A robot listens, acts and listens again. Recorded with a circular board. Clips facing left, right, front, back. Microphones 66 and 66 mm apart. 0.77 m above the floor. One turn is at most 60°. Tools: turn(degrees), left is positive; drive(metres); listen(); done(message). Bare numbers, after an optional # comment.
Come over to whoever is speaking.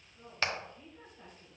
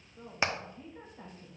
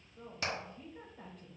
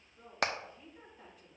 # The woman speaking: 40° right.
turn(-40)
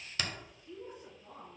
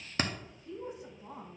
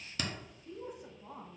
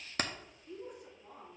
# The woman speaking is now 20° right.
turn(-20)
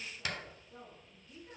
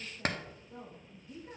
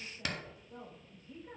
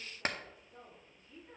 # The woman speaking is now 10° right.
turn(-10)
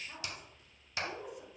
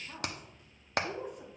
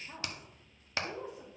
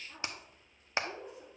drive(1.0)
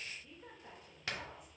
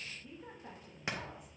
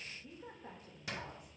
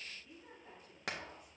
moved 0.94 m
drive(1.0)
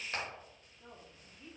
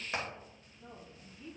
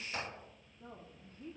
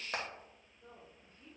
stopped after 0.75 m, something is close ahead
# The woman speaking is now 10° left.
turn(10)
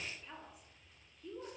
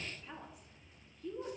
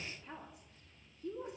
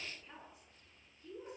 done("Arrived at the woman speaking, straight ahead.")